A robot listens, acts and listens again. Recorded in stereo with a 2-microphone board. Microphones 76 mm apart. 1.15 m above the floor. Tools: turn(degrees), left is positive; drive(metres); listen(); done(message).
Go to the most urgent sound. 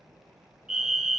turn(degrees=-30)
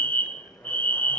turn(degrees=25)
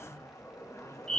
turn(degrees=15)
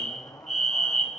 drive(metres=1.0)
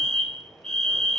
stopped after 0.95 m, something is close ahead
turn(degrees=15)
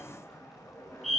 done("Arrived at the fire alarm, straight ahead.")